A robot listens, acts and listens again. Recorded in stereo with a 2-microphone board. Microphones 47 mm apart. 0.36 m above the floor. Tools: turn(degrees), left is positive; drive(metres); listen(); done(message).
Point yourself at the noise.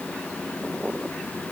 listen()
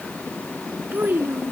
turn(degrees=-45)
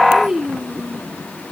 turn(degrees=-15)
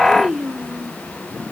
turn(degrees=-20)
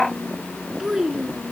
turn(degrees=-10)
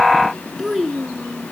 done("Facing the child speaking.")